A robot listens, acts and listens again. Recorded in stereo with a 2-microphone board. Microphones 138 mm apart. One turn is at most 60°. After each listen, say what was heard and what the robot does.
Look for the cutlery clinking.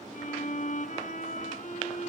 Keep listening.
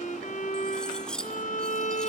Turn 30° left.
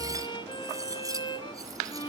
Keep listening.
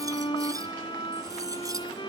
So it is at 25° right. Turn 25° right.
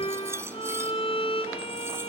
The cutlery clinking is now 20° right. Turn 20° right.
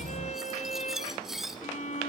Found it: cutlery clinking, straight ahead, 2 to 4 m away.